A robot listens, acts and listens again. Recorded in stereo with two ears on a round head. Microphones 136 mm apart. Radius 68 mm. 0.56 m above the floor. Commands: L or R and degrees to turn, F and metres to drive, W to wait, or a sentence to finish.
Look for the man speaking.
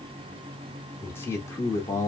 L20
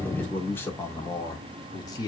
L30
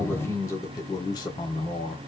L35
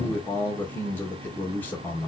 L10
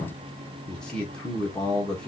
Facing the man speaking, 1 to 2 m away.